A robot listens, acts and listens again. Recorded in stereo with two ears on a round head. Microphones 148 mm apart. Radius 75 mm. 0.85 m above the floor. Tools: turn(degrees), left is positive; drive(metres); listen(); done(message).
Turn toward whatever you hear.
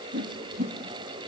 turn(degrees=-55)
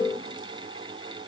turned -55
listen()
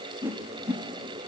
turn(degrees=-15)
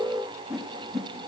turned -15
done("Facing the whoosh, 1 to 2 m away.")